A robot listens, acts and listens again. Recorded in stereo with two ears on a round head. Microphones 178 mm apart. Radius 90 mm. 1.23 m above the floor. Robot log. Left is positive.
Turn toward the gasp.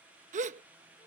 note: The gasp: about 40° right or 140° right.
cmd yaw -40
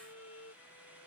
cmd idle
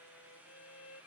end: I heard a gasp, but can't make it out now. It was about straight ahead or 100° right.